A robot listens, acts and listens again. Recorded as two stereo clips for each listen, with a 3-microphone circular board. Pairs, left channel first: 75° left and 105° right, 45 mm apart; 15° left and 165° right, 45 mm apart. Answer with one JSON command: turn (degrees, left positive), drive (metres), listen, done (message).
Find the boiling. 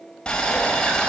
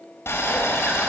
{"done": "Facing the boiling, 1 to 2 m away."}